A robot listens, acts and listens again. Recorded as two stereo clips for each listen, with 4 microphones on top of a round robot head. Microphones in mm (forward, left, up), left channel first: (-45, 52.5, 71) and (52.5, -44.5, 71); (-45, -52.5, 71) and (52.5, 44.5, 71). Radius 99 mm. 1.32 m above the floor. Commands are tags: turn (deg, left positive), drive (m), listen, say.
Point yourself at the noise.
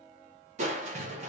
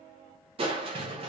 <say>Facing the crushing, under 1 m away.</say>